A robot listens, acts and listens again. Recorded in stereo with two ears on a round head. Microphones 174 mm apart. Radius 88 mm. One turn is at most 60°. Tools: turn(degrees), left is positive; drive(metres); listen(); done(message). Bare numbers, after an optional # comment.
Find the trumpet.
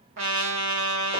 # The trumpet: about 70° right or 110° right.
turn(-60)
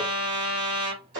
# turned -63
# So it is at 40° right.
turn(-40)
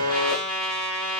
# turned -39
done("Found it: a trumpet, straight ahead, 1 to 2 m away.")